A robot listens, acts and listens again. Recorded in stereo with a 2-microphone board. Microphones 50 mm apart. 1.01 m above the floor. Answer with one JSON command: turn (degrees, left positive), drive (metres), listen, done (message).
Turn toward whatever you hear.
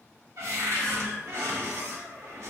{"turn": -65}
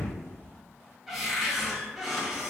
{"done": "Found it: a cupboard door, straight ahead, under 1 m away."}